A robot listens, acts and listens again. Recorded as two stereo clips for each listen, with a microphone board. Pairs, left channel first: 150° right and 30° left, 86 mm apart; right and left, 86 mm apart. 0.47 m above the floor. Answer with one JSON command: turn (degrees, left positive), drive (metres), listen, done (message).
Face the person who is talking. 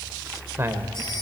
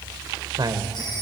{"turn": 85}
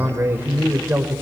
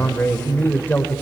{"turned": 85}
{"turn": -25}
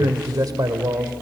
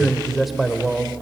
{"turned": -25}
{"done": "Found it: a man speaking, straight ahead, 1 to 2 m away."}